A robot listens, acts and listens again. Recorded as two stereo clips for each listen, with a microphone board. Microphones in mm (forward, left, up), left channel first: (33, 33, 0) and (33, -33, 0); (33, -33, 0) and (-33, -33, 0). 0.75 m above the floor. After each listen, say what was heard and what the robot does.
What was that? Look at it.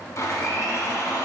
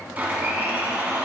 The blender: 120° left. Turn 120° left.
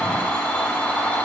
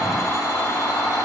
The blender is now 25° left. Turn 25° left.
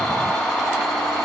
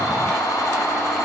The blender is now 10° left. Turn 10° left.
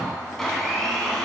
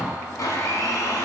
Found it: a blender, straight ahead, 1 to 2 m away.